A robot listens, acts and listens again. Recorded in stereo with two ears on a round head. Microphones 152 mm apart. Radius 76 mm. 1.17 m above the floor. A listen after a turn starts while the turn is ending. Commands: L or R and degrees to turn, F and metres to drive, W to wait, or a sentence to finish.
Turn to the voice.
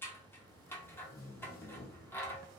W
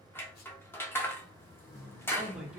R30
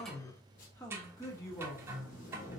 L20
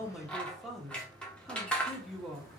Facing the man speaking.